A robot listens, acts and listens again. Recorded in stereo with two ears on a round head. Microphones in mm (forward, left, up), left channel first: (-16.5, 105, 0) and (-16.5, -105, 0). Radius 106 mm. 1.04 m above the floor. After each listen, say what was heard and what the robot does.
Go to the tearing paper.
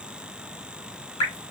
Keep listening.
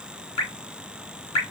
Keep listening.
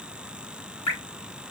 I can't make out tearing paper, only dripping.